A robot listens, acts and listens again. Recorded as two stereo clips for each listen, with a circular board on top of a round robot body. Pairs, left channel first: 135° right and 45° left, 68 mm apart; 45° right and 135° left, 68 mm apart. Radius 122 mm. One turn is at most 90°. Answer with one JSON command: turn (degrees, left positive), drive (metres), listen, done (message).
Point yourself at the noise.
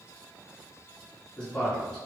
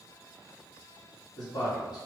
{"turn": -60}
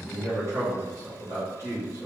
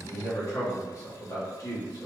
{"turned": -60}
{"done": "Found it: a man speaking, straight ahead."}